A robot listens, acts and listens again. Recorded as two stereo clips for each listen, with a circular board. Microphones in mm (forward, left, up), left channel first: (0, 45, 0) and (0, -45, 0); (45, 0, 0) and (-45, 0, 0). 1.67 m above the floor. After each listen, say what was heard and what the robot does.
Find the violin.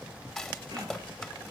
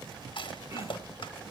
Keep listening.
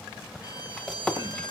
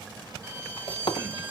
The violin: 120° left. Turn 120° left.
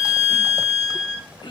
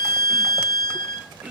Facing the violin, 2 to 4 m away.